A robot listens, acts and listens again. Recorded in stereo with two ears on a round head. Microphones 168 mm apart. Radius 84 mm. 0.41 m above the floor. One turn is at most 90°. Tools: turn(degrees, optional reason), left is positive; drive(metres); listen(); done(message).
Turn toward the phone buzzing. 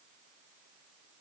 listen()
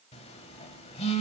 turn(degrees=30, reason="The phone buzzing: about 30° left or 150° left.")
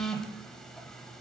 done("Facing the phone buzzing.")